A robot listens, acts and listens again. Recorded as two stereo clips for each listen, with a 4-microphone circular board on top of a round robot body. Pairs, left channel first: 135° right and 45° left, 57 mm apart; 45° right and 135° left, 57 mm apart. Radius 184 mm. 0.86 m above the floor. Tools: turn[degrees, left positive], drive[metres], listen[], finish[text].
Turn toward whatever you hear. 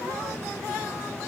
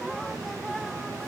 Action: listen[]
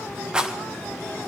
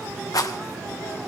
Thought: The rattle: 30° right.
Action: turn[-30]
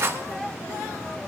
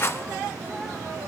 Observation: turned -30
Action: finish[Facing the rattle, 1 to 2 m away.]